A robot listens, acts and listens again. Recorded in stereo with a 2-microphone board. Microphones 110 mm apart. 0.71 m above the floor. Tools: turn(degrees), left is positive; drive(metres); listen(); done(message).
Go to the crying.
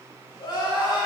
turn(degrees=45)
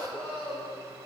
turn(degrees=90)
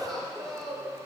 drive(metres=1.0)
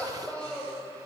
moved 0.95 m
turn(degrees=15)
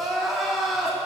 drive(metres=1.0)
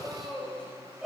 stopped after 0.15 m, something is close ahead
done("Arrived at the crying, straight ahead.")